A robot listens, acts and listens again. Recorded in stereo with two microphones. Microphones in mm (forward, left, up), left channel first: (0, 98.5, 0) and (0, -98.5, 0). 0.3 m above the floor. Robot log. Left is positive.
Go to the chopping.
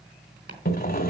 note: The chopping: about 60° right or 120° right.
cmd yaw -60
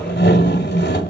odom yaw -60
cmd idle
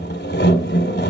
cmd idle
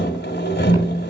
end: I heard chopping, but can't make it out now. It was about straight ahead or 60° right. I did not reach it.